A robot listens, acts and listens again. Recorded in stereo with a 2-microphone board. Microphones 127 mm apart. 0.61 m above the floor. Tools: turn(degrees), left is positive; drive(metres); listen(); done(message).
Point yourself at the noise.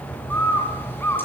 turn(degrees=15)
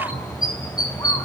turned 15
turn(degrees=150)
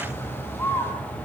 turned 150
turn(degrees=20)
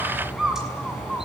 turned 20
done("Found it: a bird, straight ahead, over 4 m away.")